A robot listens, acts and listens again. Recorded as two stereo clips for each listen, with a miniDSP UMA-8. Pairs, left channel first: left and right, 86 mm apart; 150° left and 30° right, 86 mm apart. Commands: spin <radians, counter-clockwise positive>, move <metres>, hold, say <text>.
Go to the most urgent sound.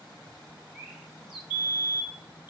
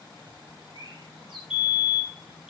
spin 1.05
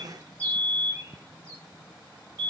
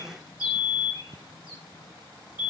spin 0.70
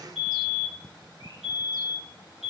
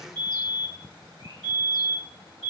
move 1.0
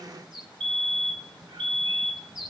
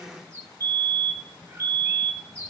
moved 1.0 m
spin 0.17
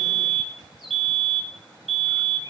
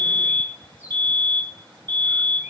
move 1.0
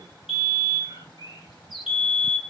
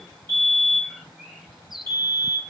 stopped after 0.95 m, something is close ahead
say Arrived at the fire alarm, straight ahead.